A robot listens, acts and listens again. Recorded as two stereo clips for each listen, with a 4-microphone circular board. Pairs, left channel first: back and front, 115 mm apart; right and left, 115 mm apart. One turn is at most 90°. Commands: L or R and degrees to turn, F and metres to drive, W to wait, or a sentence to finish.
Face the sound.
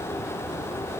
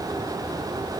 W
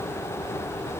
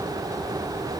W
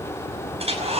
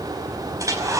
L30
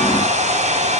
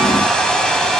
Found it: a hair dryer, straight ahead, over 4 m away.